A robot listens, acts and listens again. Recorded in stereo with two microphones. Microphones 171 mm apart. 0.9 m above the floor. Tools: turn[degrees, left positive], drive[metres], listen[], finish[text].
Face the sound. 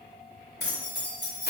Thought: The keys jangling: about 75° left or 105° left.
Action: turn[75]
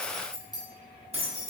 Thought: So it is at 45° right.
Action: turn[-45]
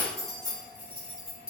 Thought: The keys jangling is now 35° right.
Action: turn[-35]
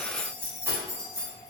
Thought: The keys jangling is now 20° right.
Action: turn[-20]
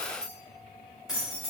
Action: finish[Facing the keys jangling, 1 to 2 m away.]